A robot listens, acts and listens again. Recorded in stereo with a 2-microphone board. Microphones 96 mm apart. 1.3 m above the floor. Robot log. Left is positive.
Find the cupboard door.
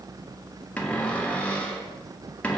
cmd yaw +30
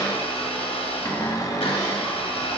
note: So it is at 135° left.
cmd yaw +135
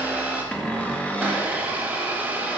note: The cupboard door is now 15° left.
cmd yaw +15
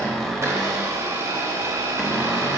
end: Facing the cupboard door, under 1 m away.